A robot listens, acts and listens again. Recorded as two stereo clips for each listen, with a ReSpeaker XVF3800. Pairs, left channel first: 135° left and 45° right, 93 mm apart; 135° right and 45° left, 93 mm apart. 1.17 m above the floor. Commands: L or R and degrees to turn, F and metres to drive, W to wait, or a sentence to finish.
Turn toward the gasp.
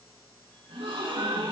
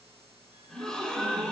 R55
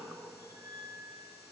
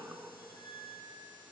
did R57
I heard a gasp from this way, but can't make it out now.